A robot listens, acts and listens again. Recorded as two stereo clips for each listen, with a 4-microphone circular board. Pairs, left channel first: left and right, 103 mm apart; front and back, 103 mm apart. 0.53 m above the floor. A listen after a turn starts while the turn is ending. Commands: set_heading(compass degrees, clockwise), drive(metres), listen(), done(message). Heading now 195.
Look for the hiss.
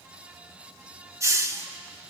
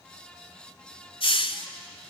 set_heading(225)
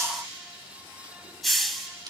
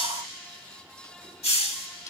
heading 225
done("Found it: a hiss, straight ahead, 1 to 2 m away.")